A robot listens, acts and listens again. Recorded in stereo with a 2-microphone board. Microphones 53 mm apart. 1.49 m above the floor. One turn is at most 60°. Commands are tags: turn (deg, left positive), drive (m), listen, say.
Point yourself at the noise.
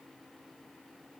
<listen/>
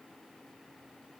<listen/>
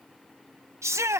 <turn deg="-60"/>
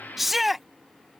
<say>Found it: a shout, straight ahead.</say>